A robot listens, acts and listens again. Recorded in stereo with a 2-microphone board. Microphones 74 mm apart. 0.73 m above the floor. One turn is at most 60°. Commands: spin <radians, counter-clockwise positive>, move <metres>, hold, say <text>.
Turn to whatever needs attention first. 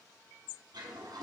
hold
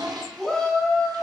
spin 0.52
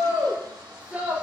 spin -0.35
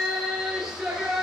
spin -0.17
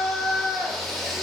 say Found it: a shout, straight ahead, 1 to 2 m away.